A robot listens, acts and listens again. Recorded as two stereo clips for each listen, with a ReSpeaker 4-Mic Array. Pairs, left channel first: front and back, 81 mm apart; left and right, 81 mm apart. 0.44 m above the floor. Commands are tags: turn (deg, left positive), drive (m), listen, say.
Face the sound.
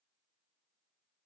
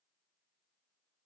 <listen/>
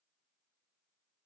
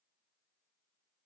<listen/>
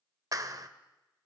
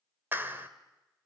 <turn deg="-150"/>
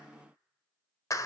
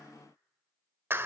<turn deg="-35"/>
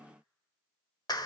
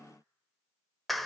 <say>Facing the clap, 1 to 2 m away.</say>